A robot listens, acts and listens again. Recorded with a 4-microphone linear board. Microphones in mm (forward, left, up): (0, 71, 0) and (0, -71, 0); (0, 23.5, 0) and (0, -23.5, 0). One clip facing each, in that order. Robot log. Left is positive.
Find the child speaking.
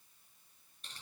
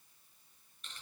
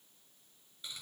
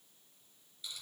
cmd idle
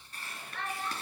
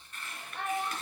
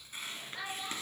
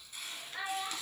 cmd yaw -30
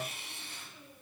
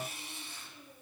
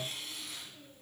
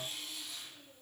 cmd idle
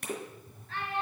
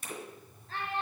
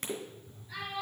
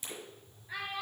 note: So it is at 145° right.
cmd yaw -145
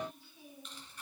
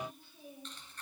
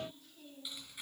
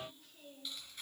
note: The child speaking is now 50° right.
cmd yaw -50
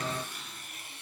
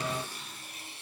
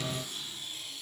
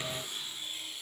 cmd idle
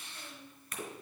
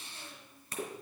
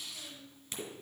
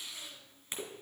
note: The child speaking is now 15° right.
cmd yaw -15
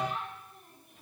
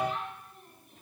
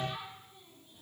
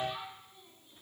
end: Found it: a child speaking, straight ahead, over 4 m away.